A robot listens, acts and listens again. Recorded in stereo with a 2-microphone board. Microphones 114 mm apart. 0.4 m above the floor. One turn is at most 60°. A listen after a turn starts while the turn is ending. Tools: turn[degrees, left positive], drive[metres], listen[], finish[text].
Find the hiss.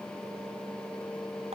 Action: listen[]
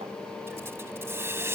Thought: The hiss: about 25° right or 155° right.
Action: turn[-25]
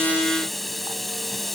Action: finish[Facing the hiss.]